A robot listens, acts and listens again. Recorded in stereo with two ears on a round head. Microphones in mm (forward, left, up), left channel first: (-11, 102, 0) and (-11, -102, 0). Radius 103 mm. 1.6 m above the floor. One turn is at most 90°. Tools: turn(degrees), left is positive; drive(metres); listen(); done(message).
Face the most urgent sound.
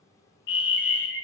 turn(degrees=55)
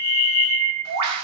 turn(degrees=55)
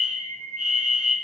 done("Found it: a fire alarm, straight ahead.")